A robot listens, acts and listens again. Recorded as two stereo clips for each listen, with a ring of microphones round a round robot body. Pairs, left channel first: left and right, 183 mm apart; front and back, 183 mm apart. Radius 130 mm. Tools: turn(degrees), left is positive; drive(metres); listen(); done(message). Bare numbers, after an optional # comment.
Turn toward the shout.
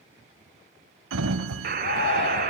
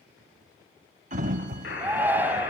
# The shout: 100° left.
turn(100)
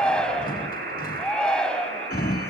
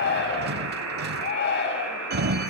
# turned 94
done("Found it: a shout, straight ahead, 2 to 4 m away.")